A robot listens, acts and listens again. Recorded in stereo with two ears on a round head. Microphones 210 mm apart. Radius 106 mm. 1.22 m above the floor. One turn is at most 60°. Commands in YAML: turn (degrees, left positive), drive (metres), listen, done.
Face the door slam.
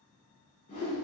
listen: true
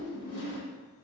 listen: true
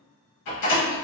turn: 60
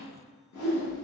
turn: 30
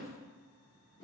done: "I heard a door slam from this way, but can't make it out now."